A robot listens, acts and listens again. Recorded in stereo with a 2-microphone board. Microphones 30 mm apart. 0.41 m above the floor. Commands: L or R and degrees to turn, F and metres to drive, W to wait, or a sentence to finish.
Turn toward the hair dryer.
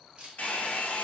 L70
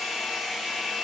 Found it: a hair dryer, straight ahead.